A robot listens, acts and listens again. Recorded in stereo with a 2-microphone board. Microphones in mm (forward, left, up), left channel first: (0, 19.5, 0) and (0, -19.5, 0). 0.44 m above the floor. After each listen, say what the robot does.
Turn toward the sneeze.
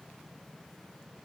Keep listening.
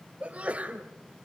Turn 35° right.
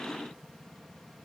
Keep listening.
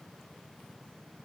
I heard a sneeze, but can't make it out now. It was about straight ahead or 110° right.